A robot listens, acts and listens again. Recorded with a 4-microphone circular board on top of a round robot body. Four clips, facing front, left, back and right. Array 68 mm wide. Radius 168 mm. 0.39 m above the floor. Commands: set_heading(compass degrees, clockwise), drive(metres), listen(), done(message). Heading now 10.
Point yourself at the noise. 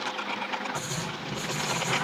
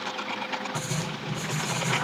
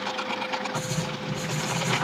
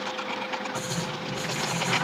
set_heading(245)
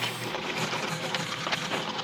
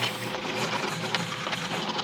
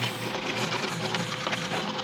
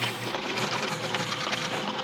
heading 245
set_heading(235)
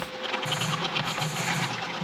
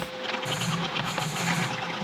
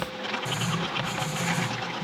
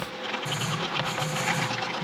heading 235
done("Facing the writing, 2 to 4 m away.")